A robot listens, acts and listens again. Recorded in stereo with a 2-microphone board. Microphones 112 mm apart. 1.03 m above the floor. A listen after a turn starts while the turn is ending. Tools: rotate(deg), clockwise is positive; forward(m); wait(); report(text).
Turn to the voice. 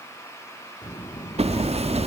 rotate(-45)
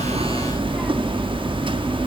wait()
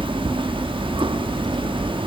wait()
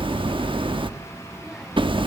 report("Found it: a child speaking, straight ahead.")